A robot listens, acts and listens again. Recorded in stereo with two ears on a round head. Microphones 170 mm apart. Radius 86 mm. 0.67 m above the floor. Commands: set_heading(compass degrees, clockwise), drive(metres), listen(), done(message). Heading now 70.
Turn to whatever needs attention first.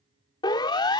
set_heading(45)
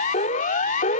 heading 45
set_heading(280)
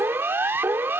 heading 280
set_heading(295)
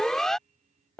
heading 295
done("Found it: a siren, straight ahead.")